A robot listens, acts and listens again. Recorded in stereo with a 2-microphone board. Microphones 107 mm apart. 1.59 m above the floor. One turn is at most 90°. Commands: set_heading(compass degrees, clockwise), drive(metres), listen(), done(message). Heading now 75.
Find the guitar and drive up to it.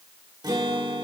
set_heading(115)
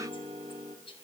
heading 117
set_heading(207)
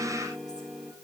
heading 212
drive(1.0)
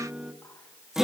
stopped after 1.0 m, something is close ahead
done("Arrived at the guitar, straight ahead.")